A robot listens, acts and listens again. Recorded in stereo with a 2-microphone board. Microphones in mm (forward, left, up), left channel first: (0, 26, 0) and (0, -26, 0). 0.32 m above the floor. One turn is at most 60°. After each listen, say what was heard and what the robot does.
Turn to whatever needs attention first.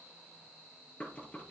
Keep listening.
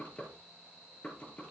Keep listening.
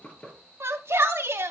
The shout: about 55° right or 125° right. Turn 55° right.
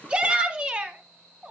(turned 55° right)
So it is at 25° right. Turn 25° right.
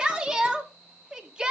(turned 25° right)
The shout is now 20° right. Turn 20° right.
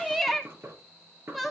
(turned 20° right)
Facing the shout, 2 to 4 m away.